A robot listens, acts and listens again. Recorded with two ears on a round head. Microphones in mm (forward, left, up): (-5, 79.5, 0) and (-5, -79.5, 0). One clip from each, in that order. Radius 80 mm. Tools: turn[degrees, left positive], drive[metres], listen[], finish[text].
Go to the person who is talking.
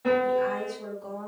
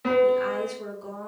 Thought: The woman speaking: about 50° right or 130° right.
Action: turn[-50]
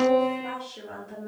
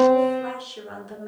Thought: So it is at 85° right.
Action: turn[-85]
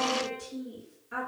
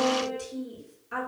Thought: The woman speaking is now 25° right.
Action: turn[-25]
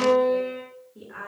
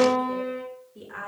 Thought: The woman speaking is now 15° right.
Action: turn[-15]
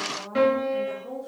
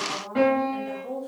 Action: drive[1.0]
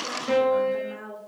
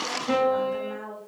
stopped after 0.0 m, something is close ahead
Action: finish[Something is in my way. I am facing the woman speaking but have not reached it.]